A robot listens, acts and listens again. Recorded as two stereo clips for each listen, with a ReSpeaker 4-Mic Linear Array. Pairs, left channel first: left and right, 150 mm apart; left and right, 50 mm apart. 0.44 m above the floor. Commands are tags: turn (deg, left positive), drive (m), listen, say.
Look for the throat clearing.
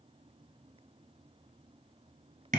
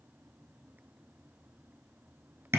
<listen/>
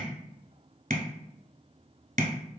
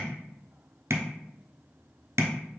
<listen/>
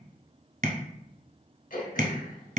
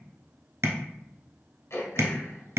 <turn deg="70"/>
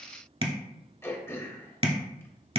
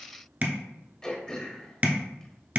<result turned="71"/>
<turn deg="20"/>
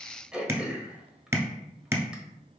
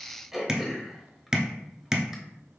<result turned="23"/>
<say>Facing the throat clearing, 1 to 2 m away.</say>